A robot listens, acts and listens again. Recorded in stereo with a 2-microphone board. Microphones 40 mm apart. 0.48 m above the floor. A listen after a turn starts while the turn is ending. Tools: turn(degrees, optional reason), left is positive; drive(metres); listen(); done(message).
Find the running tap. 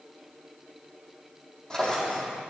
listen()
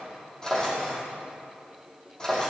listen()
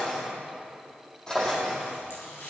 turn(degrees=90)
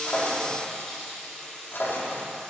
turn(degrees=10, reason="So it is at 10° left.")
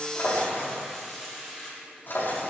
done("Found it: a running tap, straight ahead, over 4 m away.")